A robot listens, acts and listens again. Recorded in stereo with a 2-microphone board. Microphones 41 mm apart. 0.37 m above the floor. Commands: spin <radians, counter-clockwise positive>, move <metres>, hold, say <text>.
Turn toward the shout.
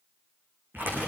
hold
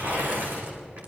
hold
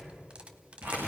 say I can't make out a shout to turn to.